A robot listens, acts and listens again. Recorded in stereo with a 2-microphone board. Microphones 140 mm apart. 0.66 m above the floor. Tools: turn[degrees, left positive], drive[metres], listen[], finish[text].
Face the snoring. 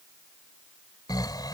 Thought: The snoring: about 30° left or 150° left.
Action: turn[30]
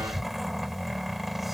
Action: finish[Facing the snoring.]